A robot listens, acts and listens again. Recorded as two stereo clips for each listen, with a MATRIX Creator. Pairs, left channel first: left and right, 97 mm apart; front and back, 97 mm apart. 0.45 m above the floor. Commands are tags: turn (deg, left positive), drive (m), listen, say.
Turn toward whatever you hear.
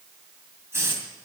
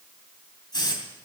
<turn deg="-30"/>
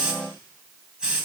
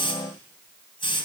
<turn deg="-10"/>
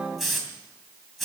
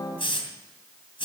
<say>Facing the hiss, 2 to 4 m away.</say>